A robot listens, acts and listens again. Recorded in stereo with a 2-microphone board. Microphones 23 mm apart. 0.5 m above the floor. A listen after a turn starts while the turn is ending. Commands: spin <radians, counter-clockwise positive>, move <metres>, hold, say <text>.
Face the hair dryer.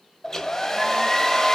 spin 0.35
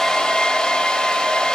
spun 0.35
spin 2.53
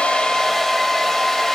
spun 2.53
spin 0.26
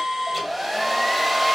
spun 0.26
say Found it: a hair dryer, straight ahead.